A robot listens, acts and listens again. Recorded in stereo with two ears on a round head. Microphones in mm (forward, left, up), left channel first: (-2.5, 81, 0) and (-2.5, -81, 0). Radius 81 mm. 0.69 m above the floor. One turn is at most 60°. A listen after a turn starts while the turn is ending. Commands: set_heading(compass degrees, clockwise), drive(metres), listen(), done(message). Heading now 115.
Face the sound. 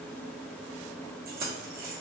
set_heading(165)
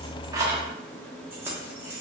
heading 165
set_heading(180)
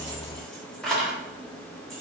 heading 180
done("Found it: keys jangling, straight ahead, under 1 m away.")